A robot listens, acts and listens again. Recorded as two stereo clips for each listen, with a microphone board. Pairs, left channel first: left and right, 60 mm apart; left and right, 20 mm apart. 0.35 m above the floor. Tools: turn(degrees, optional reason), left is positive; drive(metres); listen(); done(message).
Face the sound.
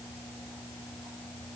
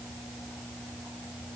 listen()
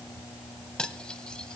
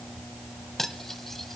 turn(degrees=30)
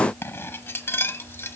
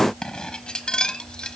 turn(degrees=135, reason="So it is at 135° left.")
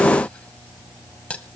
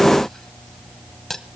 turn(degrees=20, reason="The cutlery clinking is now 20° left.")
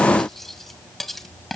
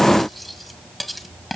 done("Found it: cutlery clinking, straight ahead.")